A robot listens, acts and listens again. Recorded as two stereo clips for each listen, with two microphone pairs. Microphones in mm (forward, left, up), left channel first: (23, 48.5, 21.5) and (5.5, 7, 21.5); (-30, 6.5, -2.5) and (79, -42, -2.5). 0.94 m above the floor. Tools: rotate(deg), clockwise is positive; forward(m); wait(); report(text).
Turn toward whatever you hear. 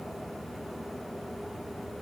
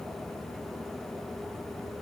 wait()
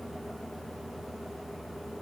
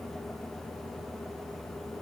wait()
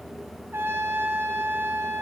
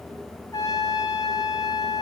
rotate(145)
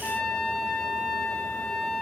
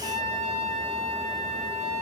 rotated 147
report("Found it: a trumpet, straight ahead, 2 to 4 m away.")